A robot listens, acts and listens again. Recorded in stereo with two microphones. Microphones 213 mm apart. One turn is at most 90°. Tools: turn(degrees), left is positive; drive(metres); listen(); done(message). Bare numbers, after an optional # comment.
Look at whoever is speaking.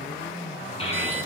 # The child speaking: about 25° left or 155° left.
turn(25)
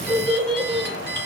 done("Facing the child speaking, over 4 m away.")